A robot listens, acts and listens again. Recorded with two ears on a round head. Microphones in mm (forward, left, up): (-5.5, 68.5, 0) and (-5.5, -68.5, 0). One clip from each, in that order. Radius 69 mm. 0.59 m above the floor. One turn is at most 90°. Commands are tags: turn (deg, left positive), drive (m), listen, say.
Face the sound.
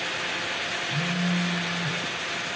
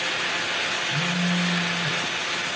<turn deg="-65"/>
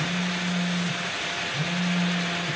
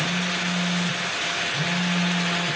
<turn deg="-45"/>
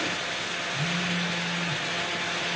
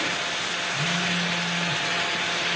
<listen/>
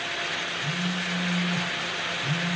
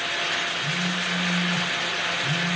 <say>Facing the phone buzzing.</say>